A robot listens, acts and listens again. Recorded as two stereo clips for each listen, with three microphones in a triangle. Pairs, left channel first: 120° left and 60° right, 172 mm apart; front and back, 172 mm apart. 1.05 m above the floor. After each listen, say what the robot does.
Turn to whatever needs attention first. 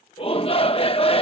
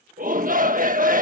Turn 170° left.
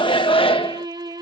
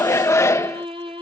Turn 70° left.
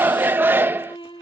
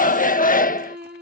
Turn 15° left.
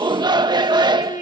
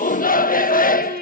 Found it: a shout, straight ahead.